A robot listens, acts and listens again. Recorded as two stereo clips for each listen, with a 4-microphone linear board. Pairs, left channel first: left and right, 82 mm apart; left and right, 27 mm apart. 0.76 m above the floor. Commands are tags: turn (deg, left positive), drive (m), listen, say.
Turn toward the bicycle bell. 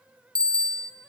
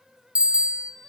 <turn deg="-55"/>
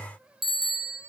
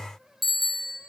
<say>Found it: a bicycle bell, straight ahead.</say>